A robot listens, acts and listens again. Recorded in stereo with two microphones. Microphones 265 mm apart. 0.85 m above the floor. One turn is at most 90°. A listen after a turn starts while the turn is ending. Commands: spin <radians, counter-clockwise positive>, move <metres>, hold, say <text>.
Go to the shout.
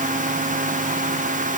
hold
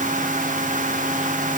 hold
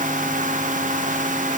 say I can't make out a shout to turn to.